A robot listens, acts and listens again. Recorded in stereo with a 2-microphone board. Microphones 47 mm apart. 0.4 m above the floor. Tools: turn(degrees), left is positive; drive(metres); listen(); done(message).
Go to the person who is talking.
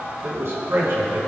turn(degrees=-60)
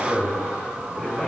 drive(metres=1.0)
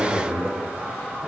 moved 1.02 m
turn(degrees=-10)
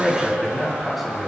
drive(metres=1.0)
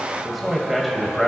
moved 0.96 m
drive(metres=1.0)
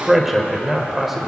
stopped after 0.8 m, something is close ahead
done("Arrived at the man speaking, straight ahead.")